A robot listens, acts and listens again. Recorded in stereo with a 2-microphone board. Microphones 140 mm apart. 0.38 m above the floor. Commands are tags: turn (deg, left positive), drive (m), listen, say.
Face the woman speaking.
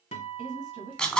<turn deg="-65"/>
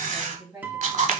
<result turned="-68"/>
<turn deg="-30"/>
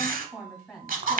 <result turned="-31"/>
<say>Facing the woman speaking.</say>